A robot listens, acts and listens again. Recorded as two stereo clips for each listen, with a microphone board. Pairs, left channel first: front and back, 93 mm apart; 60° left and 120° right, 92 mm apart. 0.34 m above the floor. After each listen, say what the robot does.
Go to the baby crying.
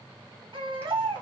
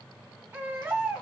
Turn 175° left.
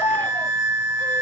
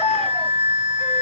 Turn 15° left.
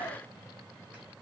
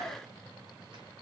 Keep listening.
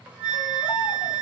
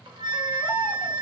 Keep listening.
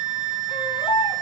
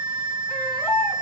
Drive 1.0 m forward.
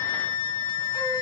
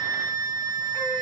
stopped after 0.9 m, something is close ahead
Keep listening.
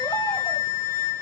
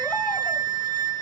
Keep listening.
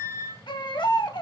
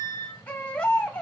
Turn 10° right.
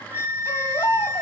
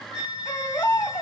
I am next to the baby crying.